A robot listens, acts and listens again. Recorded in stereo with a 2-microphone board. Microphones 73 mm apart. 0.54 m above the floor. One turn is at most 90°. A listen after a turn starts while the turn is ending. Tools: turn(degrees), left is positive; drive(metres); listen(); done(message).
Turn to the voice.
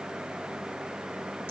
listen()
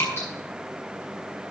listen()
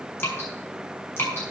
done("I can't make out anyone speaking, only dripping.")